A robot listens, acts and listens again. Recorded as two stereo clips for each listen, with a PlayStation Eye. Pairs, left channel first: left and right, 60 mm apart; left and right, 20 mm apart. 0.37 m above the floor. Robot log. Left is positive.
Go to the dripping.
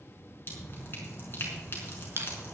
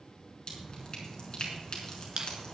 note: The dripping: about 40° left or 140° left.
cmd yaw +40
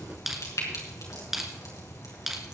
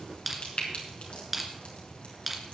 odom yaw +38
note: So it is at 100° left.
cmd yaw +100
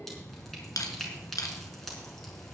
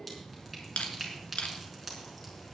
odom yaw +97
cmd fwd 1.0
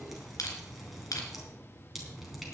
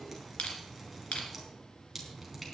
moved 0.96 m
cmd fwd 1.0
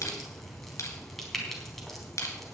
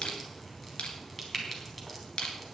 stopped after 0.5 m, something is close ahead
end: Blocked. The dripping is further on, straight ahead.